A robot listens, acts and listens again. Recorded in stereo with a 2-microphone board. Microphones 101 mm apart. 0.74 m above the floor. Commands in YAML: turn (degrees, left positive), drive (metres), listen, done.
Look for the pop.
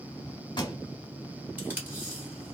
turn: 50
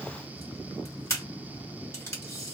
listen: true
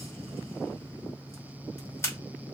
done: "I heard a pop, but can't make it out now. It was about straight ahead or 80° left."